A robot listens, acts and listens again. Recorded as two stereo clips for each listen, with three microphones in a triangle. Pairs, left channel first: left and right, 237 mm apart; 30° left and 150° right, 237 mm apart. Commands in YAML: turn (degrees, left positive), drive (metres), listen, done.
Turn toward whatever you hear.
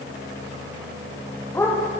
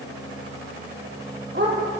turn: 170
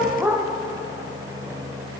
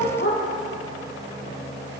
turn: -10
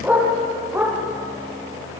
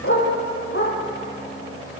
turn: -10
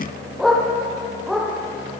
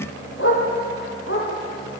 done: "Found it: a dog barking, straight ahead, over 4 m away."